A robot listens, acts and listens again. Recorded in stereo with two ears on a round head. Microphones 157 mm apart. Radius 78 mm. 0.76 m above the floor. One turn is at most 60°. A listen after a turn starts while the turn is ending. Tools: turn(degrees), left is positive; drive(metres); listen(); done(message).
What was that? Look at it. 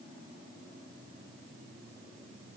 listen()
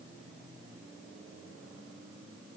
listen()
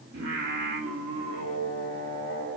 turn(degrees=-60)
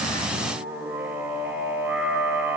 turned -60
turn(degrees=-10)
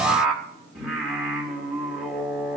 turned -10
done("Found it: singing, straight ahead, 2 to 4 m away.")